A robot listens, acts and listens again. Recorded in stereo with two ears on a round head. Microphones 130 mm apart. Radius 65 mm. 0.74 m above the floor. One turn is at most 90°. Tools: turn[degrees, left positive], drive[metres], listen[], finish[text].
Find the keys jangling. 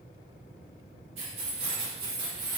Thought: The keys jangling: about 30° right or 150° right.
Action: turn[-30]
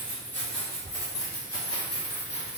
Thought: So it is at 40° left.
Action: turn[40]
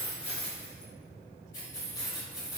Thought: The keys jangling is now 25° left.
Action: turn[25]
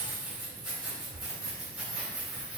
Action: finish[Facing the keys jangling, 1 to 2 m away.]